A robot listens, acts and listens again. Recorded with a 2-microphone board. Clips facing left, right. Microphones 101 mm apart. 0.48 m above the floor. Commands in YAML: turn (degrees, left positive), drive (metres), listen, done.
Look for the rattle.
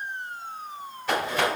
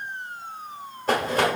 turn: -40
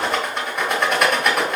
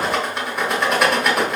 done: "Found it: a rattle, straight ahead, 1 to 2 m away."